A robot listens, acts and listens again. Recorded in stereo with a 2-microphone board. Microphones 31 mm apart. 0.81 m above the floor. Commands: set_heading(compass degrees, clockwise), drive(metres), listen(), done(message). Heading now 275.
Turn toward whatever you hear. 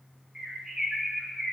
set_heading(310)
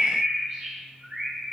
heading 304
set_heading(54)
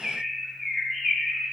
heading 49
done("Found it: a bird, straight ahead, 1 to 2 m away.")